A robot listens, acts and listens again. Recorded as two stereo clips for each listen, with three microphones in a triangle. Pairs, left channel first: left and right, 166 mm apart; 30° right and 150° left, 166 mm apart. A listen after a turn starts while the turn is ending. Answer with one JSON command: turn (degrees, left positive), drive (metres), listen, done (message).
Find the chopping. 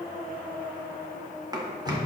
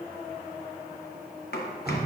{"turn": -25}
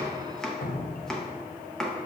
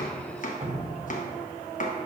{"done": "Found it: chopping, straight ahead."}